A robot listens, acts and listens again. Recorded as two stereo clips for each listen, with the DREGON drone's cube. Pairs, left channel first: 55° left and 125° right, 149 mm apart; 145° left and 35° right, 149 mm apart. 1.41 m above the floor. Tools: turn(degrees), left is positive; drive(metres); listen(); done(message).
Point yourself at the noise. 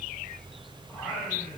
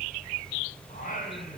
turn(degrees=150)
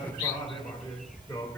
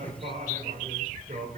turn(degrees=-10)
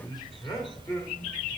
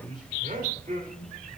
turn(degrees=-10)
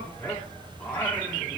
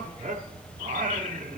turn(degrees=-20)
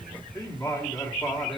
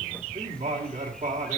turn(degrees=-10)
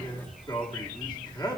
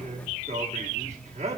done("Facing the singing, 1 to 2 m away.")